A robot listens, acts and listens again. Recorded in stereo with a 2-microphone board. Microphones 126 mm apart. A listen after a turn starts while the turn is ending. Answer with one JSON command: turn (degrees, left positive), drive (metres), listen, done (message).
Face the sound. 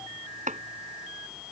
{"turn": -90}
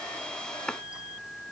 {"done": "Facing the chopping."}